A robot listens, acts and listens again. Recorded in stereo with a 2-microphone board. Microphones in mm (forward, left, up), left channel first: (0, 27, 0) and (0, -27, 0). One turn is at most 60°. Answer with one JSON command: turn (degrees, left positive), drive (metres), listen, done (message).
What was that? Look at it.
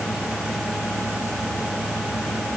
{"listen": true}
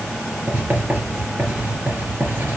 {"turn": -30}
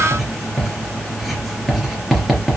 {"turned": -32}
{"done": "Facing the writing, 2 to 4 m away."}